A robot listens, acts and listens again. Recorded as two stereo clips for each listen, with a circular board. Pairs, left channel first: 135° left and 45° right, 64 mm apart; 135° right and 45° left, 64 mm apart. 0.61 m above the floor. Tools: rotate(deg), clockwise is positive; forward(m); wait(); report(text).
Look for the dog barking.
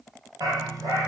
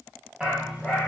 rotate(30)
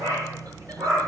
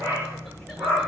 report("Found it: a dog barking, straight ahead, over 4 m away.")